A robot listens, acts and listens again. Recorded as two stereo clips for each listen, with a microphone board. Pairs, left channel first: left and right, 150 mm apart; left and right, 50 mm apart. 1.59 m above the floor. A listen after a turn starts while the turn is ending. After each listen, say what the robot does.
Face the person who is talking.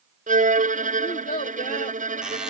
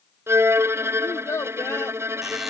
Turn 70° left.
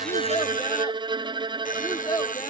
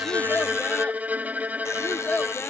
Turn 30° left.
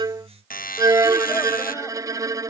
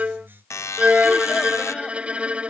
Keep listening.
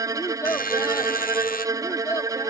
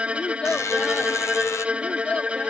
Turn 20° left.
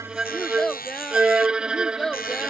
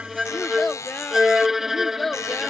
Facing the child speaking.